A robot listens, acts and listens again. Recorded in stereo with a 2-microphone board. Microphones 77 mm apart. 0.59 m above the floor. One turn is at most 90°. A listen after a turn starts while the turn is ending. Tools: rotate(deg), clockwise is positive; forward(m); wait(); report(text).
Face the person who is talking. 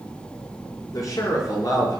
rotate(-55)
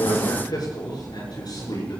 rotate(-60)
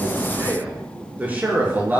rotate(25)
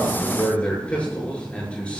rotate(-15)
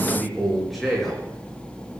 report("Facing the man speaking.")